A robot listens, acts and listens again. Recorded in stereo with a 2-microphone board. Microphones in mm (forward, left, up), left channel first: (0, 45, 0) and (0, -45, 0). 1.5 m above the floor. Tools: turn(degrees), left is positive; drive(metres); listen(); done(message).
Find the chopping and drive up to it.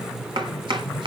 turn(degrees=-65)
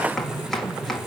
drive(metres=1.0)
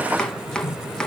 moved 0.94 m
turn(degrees=10)
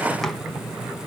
listen()
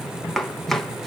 drive(metres=1.0)
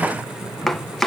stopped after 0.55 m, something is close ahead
done("Arrived at the chopping, straight ahead.")